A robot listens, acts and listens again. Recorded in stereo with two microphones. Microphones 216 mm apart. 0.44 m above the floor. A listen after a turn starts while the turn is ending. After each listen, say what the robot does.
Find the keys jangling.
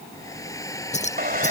Turn 35° left.
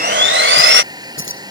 Turn 115° left.
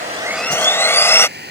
Keep listening.
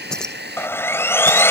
Found it: keys jangling, straight ahead.